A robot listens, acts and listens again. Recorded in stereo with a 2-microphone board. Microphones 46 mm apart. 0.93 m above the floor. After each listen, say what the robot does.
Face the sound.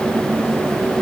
Keep listening.
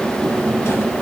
Keep listening.
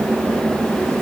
I can't make out anything to turn to.